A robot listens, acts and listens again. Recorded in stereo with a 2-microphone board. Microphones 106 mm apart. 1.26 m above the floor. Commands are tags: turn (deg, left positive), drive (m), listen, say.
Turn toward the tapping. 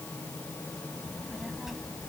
<listen/>
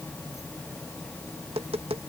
<turn deg="-75"/>
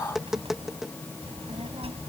<say>Facing the tapping.</say>